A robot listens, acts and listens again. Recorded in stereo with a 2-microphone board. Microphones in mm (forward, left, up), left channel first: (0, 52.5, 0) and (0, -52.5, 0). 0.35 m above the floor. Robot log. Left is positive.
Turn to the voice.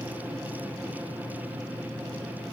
cmd idle
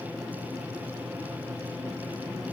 cmd idle
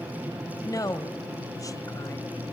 note: The woman speaking: about 35° left or 145° left.
cmd yaw +35
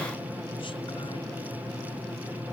cmd idle
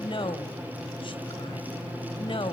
note: So it is at 105° left.
cmd yaw +105
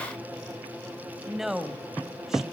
end: Facing the woman speaking, 1 to 2 m away.